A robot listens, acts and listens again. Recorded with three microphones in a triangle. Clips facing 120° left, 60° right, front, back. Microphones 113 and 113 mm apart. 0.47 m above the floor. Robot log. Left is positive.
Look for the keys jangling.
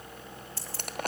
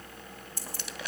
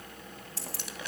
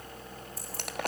note: The keys jangling: 15° left.
cmd yaw +15
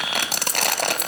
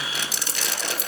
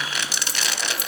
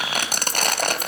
end: Found it: keys jangling, straight ahead.